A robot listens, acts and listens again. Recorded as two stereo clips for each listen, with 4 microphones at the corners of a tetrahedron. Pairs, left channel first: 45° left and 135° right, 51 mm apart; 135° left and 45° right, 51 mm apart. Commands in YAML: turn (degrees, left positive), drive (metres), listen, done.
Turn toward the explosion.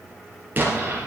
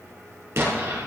turn: -80
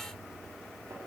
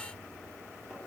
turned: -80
done: "I heard an explosion from this way, but can't make it out now."